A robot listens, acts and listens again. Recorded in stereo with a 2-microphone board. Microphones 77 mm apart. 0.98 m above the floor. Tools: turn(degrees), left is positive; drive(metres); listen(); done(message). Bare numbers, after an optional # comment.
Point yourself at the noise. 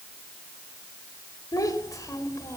# The child speaking: about 45° left or 135° left.
turn(45)
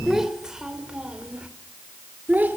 # So it is at 25° right.
turn(-25)
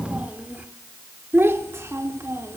# The child speaking is now 35° right.
turn(-35)
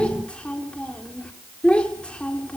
# The child speaking is now 15° left.
turn(15)
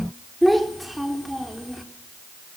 done("Found it: a child speaking, straight ahead.")